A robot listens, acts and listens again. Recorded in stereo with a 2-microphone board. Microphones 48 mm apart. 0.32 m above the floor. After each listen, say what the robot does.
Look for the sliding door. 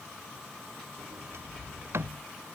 Turn 60° right.
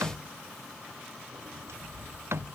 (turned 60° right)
Turn 60° right.
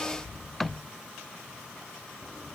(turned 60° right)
Facing the sliding door.